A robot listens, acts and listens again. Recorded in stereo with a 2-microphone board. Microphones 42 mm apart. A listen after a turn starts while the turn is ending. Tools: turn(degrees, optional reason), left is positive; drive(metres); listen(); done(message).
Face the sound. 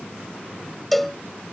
turn(degrees=30)
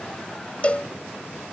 turn(degrees=150, reason="So it is at 150° left.")
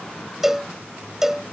turn(degrees=-10, reason="The cowbell is now 10° right.")
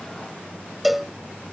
done("Facing the cowbell.")